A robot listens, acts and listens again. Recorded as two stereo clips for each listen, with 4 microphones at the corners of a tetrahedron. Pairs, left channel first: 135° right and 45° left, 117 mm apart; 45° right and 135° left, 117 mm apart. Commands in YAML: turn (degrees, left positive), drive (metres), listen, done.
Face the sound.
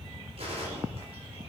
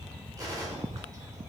turn: 75
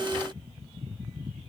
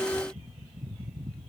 done: "Facing where the gunshot came from. I can't hear it now."